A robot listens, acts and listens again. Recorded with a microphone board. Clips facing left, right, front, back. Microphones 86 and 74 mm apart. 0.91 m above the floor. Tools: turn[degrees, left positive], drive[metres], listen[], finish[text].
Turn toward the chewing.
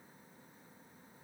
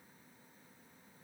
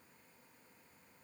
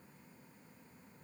Action: listen[]
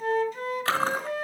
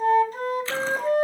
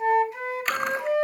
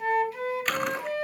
Thought: The chewing: 90° left.
Action: turn[90]
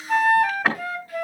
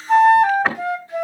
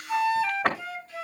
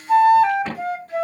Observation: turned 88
Action: finish[Found it: chewing, straight ahead, 2 to 4 m away.]